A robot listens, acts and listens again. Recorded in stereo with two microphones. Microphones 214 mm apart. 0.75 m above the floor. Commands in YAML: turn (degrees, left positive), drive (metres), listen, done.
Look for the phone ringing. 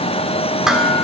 listen: true
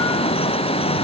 listen: true
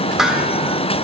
done: "I can't make out a phone ringing to turn to."